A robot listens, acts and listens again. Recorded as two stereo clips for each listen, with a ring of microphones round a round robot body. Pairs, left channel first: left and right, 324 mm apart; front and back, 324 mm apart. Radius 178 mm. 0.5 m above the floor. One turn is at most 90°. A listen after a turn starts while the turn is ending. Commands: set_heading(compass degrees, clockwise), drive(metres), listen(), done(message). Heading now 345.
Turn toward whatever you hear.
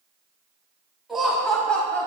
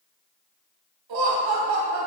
set_heading(255)
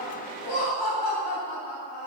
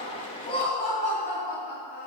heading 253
set_heading(188)
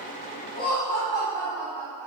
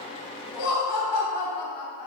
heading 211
done("Facing the laughter, 2 to 4 m away.")